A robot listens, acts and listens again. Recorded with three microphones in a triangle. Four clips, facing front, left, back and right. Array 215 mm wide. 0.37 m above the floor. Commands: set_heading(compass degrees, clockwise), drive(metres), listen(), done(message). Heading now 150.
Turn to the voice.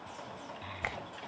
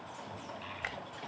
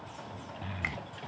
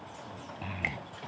set_heading(260)
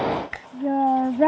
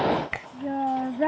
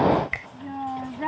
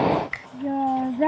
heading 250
set_heading(260)
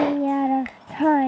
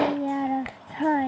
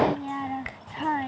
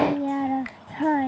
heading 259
done("Found it: a child speaking, straight ahead.")